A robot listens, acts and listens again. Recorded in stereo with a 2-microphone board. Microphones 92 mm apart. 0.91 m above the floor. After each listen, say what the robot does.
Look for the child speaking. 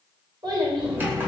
Turn 50° right.
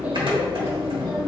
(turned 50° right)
Keep listening.
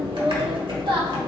Turn 60° right.
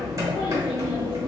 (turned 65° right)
Keep listening.
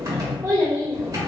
Turn 30° right.
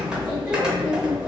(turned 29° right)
Keep listening.
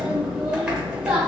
Keep listening.
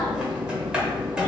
Facing where the child speaking came from. I can't hear it now.